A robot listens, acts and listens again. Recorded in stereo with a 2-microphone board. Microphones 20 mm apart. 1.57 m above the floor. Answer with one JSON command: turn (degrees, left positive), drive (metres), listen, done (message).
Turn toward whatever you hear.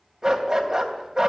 {"turn": -35}
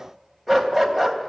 {"done": "Found it: a dog barking, straight ahead, 2 to 4 m away."}